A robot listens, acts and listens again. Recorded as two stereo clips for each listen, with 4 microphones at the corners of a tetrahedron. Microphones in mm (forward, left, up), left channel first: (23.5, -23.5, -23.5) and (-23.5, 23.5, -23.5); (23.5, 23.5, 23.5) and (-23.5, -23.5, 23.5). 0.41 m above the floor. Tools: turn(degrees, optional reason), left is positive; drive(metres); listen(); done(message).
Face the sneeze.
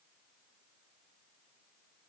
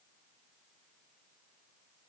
listen()
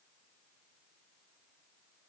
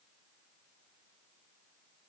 listen()
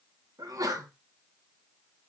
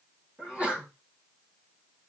turn(degrees=150, reason="The sneeze: 150° left.")
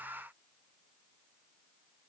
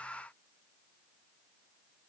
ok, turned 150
done("Facing where the sneeze came from. I can't hear it now.")